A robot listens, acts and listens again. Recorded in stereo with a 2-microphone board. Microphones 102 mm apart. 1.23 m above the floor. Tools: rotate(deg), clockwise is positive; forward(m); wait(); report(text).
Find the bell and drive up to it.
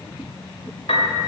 wait()
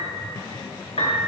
wait()
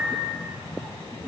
report("I can't make out a bell, only a piano.")